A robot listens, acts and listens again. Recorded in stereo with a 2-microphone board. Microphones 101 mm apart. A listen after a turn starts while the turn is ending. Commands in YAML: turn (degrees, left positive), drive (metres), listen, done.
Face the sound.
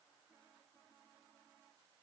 listen: true
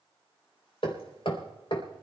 turn: 65
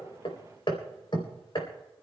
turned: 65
turn: 55
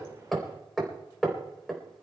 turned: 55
done: "Facing the hammering, 2 to 4 m away."